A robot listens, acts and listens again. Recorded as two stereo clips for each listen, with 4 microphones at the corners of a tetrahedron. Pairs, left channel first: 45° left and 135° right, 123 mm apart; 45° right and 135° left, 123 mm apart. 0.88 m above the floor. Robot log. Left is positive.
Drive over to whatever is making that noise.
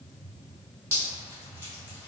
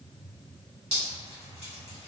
note: The dripping: 155° left.
cmd yaw +155
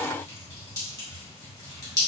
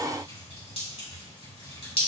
note: The dripping is now 15° right.
cmd yaw -15
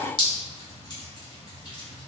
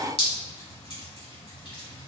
note: The dripping is now 10° right.
cmd yaw -10
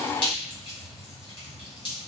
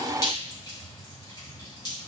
cmd fwd 1.0
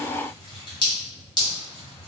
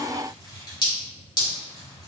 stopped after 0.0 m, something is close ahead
end: Blocked. The dripping is further on, straight ahead.